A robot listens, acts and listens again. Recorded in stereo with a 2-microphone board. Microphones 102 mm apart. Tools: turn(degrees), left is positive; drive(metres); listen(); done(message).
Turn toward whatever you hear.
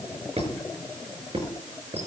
turn(degrees=-90)
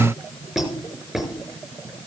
done("Found it: a squeak, straight ahead.")